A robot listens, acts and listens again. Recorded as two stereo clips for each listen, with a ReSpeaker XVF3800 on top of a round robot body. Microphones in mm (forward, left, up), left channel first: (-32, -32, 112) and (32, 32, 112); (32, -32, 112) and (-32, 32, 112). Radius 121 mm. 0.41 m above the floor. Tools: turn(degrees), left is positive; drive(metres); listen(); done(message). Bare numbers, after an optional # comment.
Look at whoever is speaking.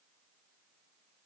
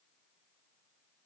listen()
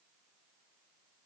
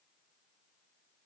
listen()
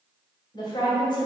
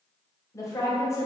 # The woman speaking: 105° right.
turn(-105)
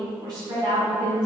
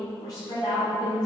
done("Found it: a woman speaking, straight ahead, 2 to 4 m away.")